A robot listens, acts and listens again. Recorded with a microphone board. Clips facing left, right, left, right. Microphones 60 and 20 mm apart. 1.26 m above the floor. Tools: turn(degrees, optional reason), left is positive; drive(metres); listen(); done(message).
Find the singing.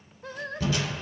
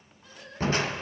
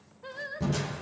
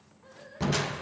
turn(degrees=55, reason="The singing: about 55° left or 125° left.")
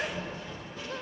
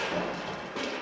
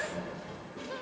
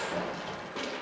listen()
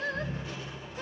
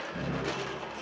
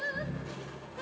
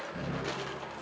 turn(degrees=65, reason="So it is at 65° left.")
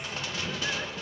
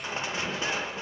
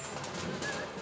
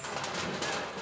listen()
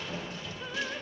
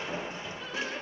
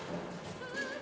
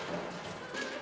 listen()
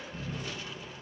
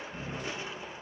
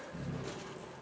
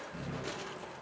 done("Facing where the singing came from. I can't hear it now.")